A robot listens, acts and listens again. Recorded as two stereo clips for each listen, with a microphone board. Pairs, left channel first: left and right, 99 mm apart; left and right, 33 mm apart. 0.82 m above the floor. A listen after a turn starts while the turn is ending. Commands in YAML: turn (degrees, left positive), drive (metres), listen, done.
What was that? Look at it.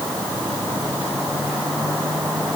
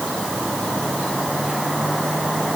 listen: true
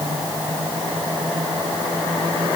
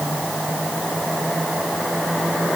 listen: true
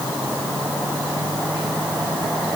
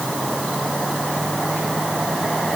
done: "I can't make out anything to turn to."